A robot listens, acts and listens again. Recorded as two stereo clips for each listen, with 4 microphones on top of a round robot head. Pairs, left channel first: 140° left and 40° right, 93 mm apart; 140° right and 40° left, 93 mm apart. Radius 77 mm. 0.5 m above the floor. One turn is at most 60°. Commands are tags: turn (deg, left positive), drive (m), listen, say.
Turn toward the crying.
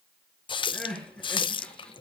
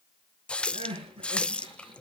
<turn deg="60"/>
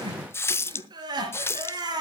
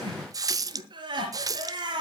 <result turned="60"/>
<say>Found it: crying, straight ahead.</say>